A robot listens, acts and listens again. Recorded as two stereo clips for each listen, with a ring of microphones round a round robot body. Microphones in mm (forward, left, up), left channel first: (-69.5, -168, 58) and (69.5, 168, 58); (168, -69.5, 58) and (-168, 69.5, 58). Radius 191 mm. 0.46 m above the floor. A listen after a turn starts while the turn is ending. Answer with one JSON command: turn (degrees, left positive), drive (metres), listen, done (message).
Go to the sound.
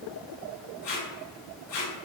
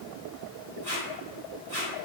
{"turn": -135}
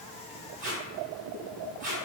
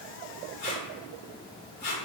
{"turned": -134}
{"drive": 1.0}
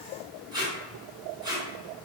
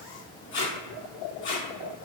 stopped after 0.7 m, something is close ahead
{"turn": -10}
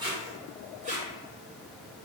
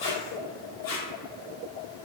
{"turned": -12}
{"done": "Arrived at the tape being pulled, straight ahead."}